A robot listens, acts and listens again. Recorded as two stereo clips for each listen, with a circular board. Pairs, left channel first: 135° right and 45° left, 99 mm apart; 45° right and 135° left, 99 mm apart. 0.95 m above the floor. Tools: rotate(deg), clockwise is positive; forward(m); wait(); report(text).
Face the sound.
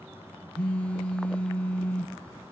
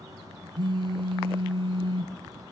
rotate(-150)
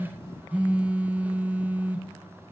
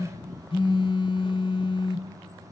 rotate(30)
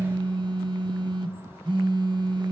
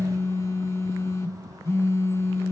rotate(-15)
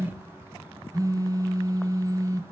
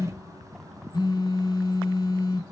report("Found it: a phone buzzing, straight ahead, under 1 m away.")